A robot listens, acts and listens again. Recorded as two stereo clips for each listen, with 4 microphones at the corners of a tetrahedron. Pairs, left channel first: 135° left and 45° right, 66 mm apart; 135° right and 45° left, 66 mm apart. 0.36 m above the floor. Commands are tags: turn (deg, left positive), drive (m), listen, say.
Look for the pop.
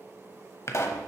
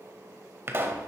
<turn deg="100"/>
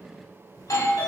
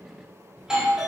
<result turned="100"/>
<say>Facing where the pop came from. I can't hear it now.</say>